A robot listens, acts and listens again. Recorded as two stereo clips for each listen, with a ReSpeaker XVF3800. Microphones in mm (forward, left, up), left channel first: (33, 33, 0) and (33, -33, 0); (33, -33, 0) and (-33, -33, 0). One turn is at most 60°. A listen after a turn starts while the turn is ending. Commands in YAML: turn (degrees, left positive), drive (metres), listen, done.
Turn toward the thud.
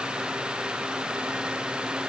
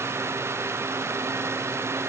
listen: true
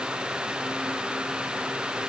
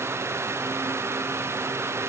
listen: true
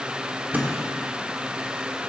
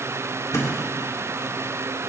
turn: -30
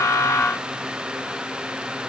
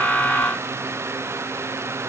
done: "I heard a thud from this way, but can't make it out now."